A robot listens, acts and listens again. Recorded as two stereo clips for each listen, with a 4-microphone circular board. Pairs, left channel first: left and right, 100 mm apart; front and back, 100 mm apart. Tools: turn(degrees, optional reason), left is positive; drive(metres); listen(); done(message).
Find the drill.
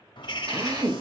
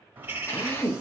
turn(degrees=-55, reason="The drill: 55° right.")
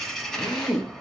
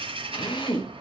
done("Found it: a drill, straight ahead.")